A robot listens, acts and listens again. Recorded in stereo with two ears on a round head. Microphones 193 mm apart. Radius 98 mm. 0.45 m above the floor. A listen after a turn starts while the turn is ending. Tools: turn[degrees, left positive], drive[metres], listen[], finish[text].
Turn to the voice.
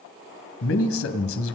Thought: The man speaking: about 65° left or 115° left.
Action: turn[65]
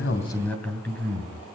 Thought: So it is at 10° left.
Action: turn[10]
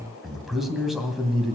Action: finish[Facing the man speaking.]